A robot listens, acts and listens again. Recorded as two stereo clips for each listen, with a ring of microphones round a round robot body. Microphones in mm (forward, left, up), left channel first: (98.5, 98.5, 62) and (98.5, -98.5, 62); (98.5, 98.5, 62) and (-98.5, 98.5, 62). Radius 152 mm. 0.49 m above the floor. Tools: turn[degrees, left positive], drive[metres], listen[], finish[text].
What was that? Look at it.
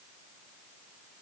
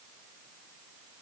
Action: listen[]
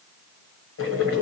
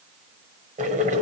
Thought: The boiling: 125° left.
Action: turn[125]
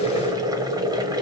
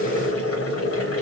Thought: The boiling is now 15° right.
Action: turn[-15]
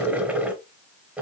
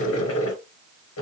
Action: finish[Found it: boiling, straight ahead, 1 to 2 m away.]